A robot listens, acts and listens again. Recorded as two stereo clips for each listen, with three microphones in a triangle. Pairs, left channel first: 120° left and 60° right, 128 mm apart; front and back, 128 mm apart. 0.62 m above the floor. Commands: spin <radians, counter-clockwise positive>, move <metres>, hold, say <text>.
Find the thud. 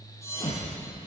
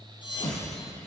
spin 0.96
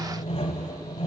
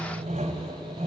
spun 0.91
say I heard a thud from this way, but can't make it out now.